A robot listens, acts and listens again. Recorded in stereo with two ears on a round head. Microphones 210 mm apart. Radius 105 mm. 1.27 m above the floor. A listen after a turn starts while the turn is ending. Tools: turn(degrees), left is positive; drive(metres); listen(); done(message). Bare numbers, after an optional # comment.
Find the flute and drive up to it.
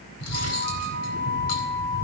# The flute: about 55° right or 125° right.
turn(-55)
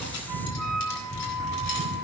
drive(1.0)
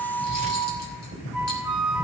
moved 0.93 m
drive(1.0)
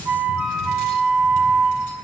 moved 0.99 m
drive(1.0)
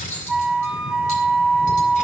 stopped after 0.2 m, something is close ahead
done("Arrived at the flute, straight ahead.")